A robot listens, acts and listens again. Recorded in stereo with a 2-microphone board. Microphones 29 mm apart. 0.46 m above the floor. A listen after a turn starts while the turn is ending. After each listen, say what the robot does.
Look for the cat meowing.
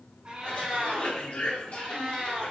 Turn 45° right.
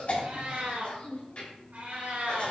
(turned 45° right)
Turn 75° right.
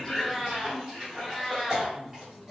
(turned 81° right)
Turn 10° left.
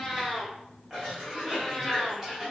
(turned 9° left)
Found it: a cat meowing, straight ahead, 2 to 4 m away.